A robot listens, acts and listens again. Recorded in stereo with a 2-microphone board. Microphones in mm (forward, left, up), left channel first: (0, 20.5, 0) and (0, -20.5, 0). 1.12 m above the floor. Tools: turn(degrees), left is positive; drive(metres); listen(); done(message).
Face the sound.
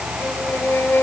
turn(degrees=70)
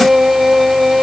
done("Found it: a violin, straight ahead.")